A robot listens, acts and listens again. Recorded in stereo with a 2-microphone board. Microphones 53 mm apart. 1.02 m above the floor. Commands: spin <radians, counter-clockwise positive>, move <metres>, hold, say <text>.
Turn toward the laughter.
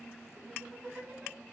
spin -0.52
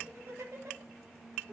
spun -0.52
spin -2.01
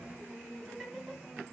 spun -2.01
spin -0.17
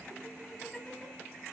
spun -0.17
say Facing the laughter.